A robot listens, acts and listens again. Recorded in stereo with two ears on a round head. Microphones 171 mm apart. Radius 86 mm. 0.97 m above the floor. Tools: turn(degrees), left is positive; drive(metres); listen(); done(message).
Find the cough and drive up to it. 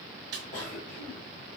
turn(degrees=45)
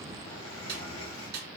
turn(degrees=90)
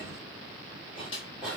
drive(metres=1.0)
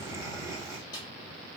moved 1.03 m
turn(degrees=-20)
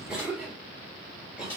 drive(metres=1.0)
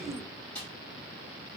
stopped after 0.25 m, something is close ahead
done("Arrived at the cough, straight ahead.")